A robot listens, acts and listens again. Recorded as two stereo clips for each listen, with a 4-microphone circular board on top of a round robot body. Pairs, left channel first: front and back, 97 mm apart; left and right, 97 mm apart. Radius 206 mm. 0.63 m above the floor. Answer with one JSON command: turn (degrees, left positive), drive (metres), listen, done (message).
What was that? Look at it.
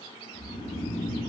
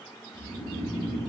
{"turn": -45}
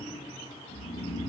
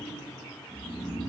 {"done": "Facing the snoring."}